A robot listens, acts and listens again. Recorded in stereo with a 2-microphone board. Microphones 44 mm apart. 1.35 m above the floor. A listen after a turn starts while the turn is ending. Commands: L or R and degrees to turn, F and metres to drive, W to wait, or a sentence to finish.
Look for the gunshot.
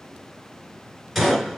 L30
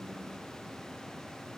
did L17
W
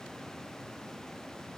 I heard a gunshot, but can't make it out now. It was about 15° right or 160° left.